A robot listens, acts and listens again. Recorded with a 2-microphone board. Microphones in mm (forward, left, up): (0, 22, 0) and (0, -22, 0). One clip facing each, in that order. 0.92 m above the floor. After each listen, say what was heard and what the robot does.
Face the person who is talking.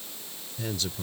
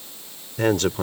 The man speaking: about 55° right or 125° right. Turn 55° right.
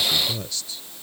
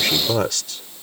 So it is at 70° right. Turn 70° right.
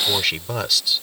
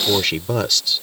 Found it: a man speaking, straight ahead.